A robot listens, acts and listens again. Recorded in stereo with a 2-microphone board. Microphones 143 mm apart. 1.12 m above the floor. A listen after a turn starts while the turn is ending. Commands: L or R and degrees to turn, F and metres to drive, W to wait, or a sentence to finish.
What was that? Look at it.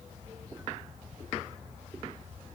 W
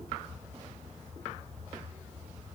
W
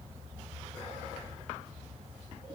I can't make out anything.